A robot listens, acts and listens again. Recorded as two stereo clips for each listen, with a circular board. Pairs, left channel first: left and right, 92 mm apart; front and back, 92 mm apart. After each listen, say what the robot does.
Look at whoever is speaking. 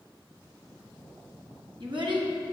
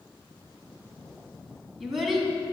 Turn 95° right.
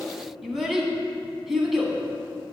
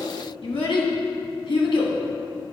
Facing the child speaking.